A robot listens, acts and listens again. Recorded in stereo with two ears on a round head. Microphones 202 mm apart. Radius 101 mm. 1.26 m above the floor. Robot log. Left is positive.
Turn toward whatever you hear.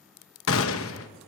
note: The gunshot: about 70° left or 110° left.
cmd yaw +70
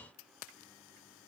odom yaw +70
cmd idle
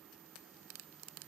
end: I heard a gunshot, but can't make it out now. It was about straight ahead or 40° left.